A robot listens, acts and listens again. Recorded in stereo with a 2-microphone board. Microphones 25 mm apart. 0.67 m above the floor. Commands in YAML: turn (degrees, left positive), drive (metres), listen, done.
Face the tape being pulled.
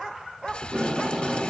turn: -25
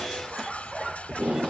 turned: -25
turn: -130
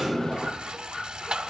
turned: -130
turn: 20
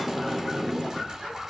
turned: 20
done: "Found it: tape being pulled, straight ahead, 1 to 2 m away."